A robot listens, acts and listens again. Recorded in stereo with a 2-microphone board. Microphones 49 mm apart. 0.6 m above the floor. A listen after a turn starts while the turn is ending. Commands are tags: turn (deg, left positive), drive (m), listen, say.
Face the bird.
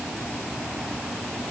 <listen/>
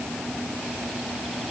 <listen/>
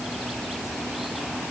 <say>I can't make out a bird.</say>